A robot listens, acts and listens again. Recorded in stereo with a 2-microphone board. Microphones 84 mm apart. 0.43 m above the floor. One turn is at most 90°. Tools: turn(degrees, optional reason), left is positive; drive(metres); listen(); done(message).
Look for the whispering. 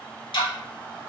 listen()
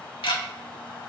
listen()
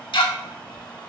done("I can't make out whispering to turn to.")